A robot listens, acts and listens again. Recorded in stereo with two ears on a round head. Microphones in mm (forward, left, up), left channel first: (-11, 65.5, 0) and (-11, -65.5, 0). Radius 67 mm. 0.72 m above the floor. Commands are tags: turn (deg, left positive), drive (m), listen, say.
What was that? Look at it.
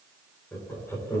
<turn deg="20"/>
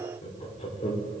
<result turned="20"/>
<turn deg="130"/>
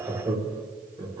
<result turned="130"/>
<turn deg="-25"/>
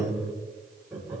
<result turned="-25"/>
<turn deg="-10"/>
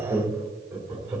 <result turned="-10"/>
<turn deg="-15"/>
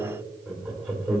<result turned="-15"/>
<say>Facing the laughter, 2 to 4 m away.</say>